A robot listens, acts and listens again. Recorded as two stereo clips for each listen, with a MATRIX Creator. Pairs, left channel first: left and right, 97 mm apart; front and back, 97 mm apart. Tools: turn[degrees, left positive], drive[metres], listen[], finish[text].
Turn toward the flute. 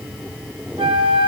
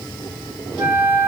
Thought: The flute: 115° right.
Action: turn[-115]
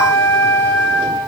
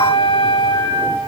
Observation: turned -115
Thought: The flute is now 25° left.
Action: turn[25]
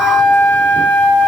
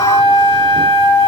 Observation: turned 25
Thought: The flute is now 15° left.
Action: turn[15]
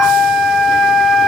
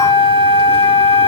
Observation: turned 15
Action: finish[Facing the flute, 1 to 2 m away.]